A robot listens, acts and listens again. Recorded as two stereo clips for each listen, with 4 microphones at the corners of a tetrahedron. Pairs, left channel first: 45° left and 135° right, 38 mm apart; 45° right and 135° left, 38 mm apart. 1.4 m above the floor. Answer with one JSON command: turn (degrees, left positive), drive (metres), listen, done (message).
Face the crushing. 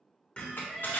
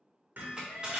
{"turn": 65}
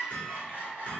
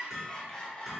{"listen": true}
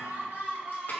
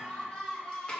{"listen": true}
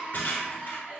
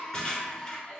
{"turn": 20}
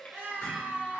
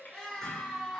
{"listen": true}
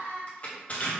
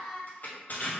{"done": "Facing the crushing."}